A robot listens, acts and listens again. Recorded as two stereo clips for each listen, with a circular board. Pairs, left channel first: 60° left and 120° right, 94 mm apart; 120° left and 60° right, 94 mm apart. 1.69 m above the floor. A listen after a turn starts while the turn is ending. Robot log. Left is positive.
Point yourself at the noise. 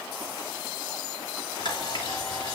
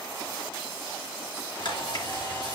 note: The camera shutter: 90° left.
cmd yaw +90
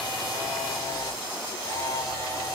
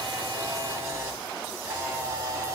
end: Found it: a camera shutter, straight ahead.